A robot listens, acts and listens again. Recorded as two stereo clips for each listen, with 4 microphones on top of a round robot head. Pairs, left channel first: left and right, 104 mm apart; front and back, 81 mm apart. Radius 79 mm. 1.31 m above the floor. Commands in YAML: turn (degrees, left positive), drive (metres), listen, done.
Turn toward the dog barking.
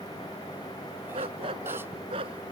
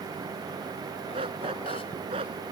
turn: -140
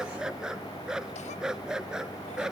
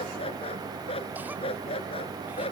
done: "Facing the dog barking."